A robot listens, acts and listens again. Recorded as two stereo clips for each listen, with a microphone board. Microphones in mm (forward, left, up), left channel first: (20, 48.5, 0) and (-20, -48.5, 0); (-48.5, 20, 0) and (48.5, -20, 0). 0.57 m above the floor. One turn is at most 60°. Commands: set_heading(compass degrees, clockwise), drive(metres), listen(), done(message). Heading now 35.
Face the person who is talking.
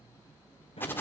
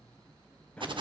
listen()
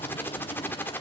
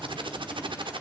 listen()
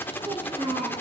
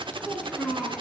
set_heading(95)
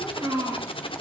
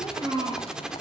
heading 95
set_heading(150)
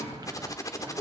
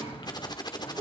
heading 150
done("Found it: a child speaking, straight ahead, over 4 m away.")